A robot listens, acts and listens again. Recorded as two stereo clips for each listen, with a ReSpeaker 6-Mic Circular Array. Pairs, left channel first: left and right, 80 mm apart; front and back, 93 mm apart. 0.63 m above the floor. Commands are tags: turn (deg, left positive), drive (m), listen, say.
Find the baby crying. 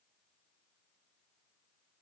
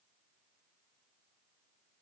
<listen/>
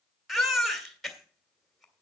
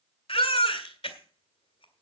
<say>Found it: a baby crying, straight ahead, 2 to 4 m away.</say>